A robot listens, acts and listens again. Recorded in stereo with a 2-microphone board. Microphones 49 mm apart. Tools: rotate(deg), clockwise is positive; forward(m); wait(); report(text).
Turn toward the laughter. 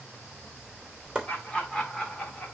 rotate(-30)
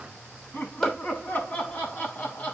rotate(-145)
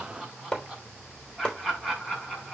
report("Found it: laughter, straight ahead.")